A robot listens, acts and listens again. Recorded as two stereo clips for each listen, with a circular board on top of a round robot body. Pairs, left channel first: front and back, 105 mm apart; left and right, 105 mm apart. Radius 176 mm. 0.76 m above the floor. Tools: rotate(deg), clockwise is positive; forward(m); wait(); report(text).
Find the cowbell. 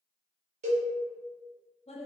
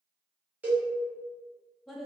rotate(165)
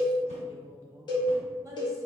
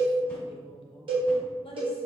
rotate(50)
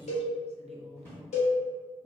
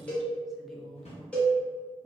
rotate(-10)
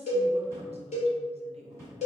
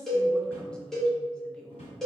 report("Found it: a cowbell, straight ahead.")